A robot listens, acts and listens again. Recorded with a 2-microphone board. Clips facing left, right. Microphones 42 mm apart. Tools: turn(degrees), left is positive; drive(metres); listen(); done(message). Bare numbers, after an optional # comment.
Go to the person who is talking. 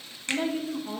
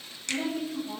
# The woman speaking: about 50° left or 130° left.
turn(50)
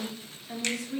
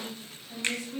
# So it is at 80° left.
turn(80)
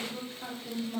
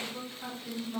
# The woman speaking is now 10° left.
turn(10)
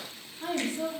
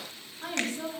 drive(1.0)
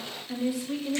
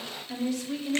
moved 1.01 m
# The woman speaking is now 15° left.
turn(15)
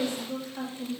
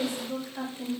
drive(1.0)
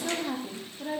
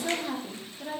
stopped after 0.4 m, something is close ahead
done("Arrived at the woman speaking, straight ahead.")